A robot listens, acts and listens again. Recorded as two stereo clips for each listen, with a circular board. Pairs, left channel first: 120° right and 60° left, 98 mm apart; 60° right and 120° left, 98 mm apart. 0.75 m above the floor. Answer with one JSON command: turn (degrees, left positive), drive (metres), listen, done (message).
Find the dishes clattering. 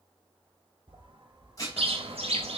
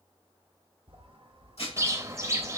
{"turn": -65}
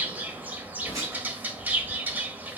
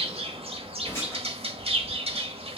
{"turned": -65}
{"listen": true}
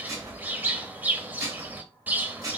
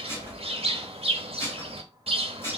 {"done": "Found it: dishes clattering, straight ahead, 2 to 4 m away."}